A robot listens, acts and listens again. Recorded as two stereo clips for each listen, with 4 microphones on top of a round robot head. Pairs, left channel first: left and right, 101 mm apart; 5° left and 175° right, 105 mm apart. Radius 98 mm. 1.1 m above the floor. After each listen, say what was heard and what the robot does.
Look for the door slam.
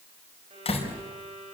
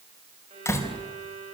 The door slam: 70° left. Turn 70° left.
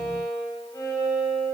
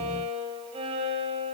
Facing where the door slam came from. I can't hear it now.